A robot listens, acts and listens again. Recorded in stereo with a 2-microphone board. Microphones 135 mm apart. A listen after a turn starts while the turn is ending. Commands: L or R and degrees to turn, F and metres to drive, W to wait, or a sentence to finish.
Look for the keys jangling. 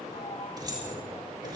R30
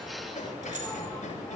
R115
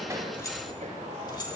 L35
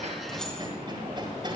W
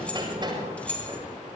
L10
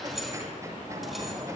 Facing the keys jangling, 2 to 4 m away.